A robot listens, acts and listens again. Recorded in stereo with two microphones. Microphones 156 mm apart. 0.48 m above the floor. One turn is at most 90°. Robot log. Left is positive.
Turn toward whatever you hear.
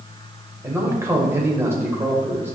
note: The man speaking: about 15° right or 165° right.
cmd yaw -15
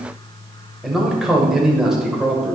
end: Facing the man speaking, 1 to 2 m away.